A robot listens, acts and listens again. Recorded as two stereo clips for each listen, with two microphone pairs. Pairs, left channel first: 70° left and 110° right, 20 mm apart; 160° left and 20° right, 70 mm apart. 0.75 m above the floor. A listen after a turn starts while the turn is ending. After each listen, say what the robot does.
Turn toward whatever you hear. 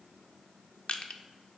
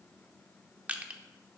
Turn 55° left.
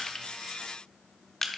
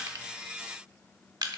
Found it: crushing, straight ahead.